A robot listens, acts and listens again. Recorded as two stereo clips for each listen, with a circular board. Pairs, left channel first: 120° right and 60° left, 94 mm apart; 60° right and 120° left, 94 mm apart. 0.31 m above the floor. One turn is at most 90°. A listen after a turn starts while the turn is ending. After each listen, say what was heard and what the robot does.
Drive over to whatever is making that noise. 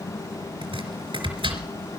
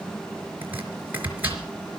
The chopping: 50° left. Turn 50° left.
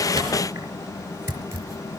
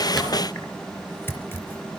Drive 1.0 m forward.
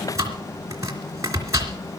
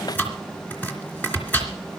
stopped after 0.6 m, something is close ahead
The chopping is now 10° left. Turn 10° left.
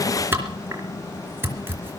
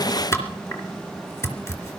Something is in my way. I am facing the chopping but have not reached it.